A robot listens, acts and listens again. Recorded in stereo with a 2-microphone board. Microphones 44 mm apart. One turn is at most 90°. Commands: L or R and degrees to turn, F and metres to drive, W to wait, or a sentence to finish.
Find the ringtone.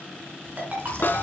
R40
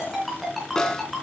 Found it: a ringtone, straight ahead.